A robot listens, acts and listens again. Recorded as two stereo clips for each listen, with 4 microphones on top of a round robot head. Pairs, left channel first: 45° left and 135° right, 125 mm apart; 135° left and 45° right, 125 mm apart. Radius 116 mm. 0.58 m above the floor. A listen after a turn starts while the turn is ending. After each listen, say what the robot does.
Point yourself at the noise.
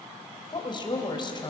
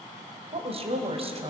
Facing the woman speaking, 2 to 4 m away.